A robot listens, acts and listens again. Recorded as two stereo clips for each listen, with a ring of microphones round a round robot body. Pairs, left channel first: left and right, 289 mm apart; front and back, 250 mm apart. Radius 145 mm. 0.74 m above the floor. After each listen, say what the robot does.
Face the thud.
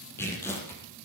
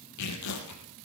Keep listening.
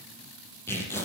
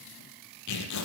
Keep listening.
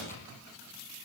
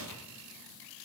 I can't make out a thud, only tearing paper.